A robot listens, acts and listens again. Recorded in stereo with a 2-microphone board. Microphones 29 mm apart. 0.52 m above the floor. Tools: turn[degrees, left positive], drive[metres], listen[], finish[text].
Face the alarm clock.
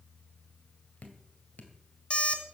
Thought: The alarm clock: about 45° left or 135° left.
Action: turn[45]
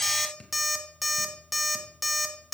Action: finish[Found it: an alarm clock, straight ahead.]